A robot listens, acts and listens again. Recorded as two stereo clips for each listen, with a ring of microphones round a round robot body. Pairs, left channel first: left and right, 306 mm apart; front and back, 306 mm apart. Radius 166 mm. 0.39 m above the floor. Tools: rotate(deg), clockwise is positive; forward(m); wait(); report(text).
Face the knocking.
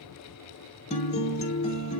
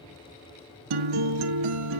wait()
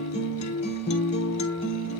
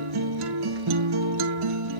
wait()
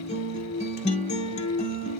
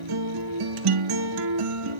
report("I can't make out knocking, only a guitar.")